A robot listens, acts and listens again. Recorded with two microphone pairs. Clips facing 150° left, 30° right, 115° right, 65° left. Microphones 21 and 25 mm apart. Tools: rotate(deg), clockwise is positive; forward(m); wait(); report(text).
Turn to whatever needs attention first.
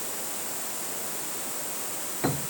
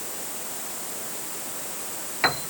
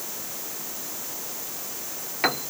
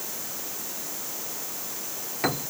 wait()
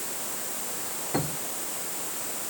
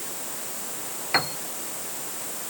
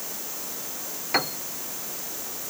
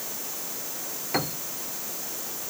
wait()
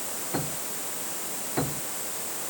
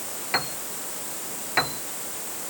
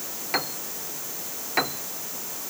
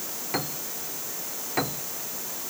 report("I can't make out anything urgent to turn to.")